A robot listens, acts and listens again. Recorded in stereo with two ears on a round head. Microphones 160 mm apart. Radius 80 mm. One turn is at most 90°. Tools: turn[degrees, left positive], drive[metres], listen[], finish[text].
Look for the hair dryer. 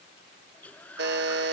Action: turn[30]
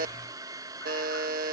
Thought: So it is at 20° right.
Action: turn[-20]
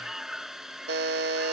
Action: finish[Facing the hair dryer.]